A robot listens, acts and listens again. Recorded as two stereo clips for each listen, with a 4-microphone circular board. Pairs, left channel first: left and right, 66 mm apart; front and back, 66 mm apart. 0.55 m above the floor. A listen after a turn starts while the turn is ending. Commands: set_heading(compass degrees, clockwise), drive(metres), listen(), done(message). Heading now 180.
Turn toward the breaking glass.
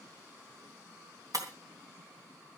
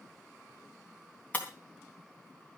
set_heading(245)
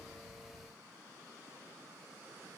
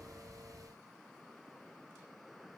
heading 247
done("I heard breaking glass from this way, but can't make it out now.")